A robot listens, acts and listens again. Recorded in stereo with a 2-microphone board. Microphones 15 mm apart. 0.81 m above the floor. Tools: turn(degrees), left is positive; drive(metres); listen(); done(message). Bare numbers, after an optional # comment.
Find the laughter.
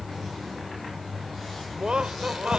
# The laughter: about 70° right or 110° right.
turn(-70)
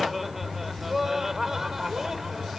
# So it is at 25° right.
turn(-25)
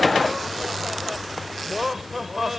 # The laughter is now 15° right.
turn(-15)
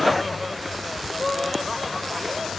done("Found it: laughter, straight ahead.")